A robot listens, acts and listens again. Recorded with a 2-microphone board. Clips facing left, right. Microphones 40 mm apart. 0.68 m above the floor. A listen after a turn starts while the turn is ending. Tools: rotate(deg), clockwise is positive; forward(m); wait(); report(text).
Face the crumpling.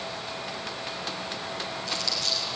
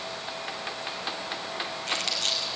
rotate(55)
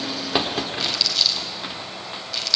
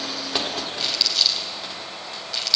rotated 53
report("Facing the crumpling, over 4 m away.")